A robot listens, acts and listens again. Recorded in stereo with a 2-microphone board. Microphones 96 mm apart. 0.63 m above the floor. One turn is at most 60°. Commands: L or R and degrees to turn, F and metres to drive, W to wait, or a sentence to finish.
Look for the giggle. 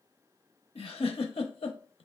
L60
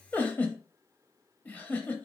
L15
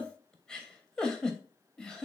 Facing the giggle.